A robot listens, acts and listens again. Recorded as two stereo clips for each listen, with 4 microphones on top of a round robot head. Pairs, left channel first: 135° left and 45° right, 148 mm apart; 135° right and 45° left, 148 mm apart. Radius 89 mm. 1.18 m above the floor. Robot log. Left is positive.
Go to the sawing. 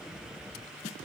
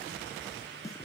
cmd idle
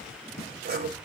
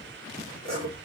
note: The sawing: 70° right.
cmd yaw -70
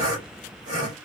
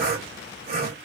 note: The sawing is now 20° left.
cmd yaw +20
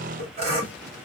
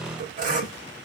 cmd fwd 1.0
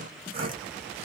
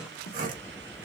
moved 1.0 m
note: The sawing is now 10° left.
cmd yaw +10
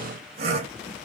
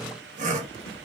cmd fwd 1.0
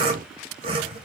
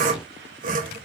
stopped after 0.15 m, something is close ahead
note: The sawing is now 10° left.
cmd yaw +10
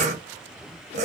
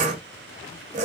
end: I am next to the sawing.